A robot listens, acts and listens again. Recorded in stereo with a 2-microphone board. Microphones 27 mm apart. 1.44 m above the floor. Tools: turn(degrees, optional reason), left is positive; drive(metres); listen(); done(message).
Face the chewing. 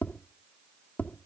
listen()
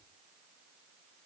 listen()
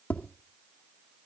done("I can't make out chewing to turn to.")